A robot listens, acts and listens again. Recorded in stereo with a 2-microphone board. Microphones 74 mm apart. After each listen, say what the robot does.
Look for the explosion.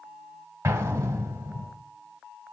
Turn 40° right.
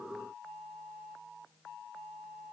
Keep listening.
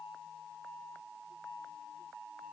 I heard an explosion, but can't make it out now. It was about straight ahead or 100° right.